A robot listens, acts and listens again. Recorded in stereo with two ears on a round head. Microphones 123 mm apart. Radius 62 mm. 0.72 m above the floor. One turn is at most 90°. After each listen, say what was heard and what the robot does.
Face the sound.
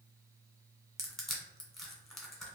Turn 30° left.
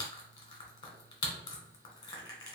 So it is at 150° left. Turn 90° left.
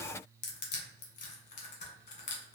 The crushing is now 65° left. Turn 65° left.
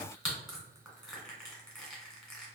Found it: crushing, straight ahead.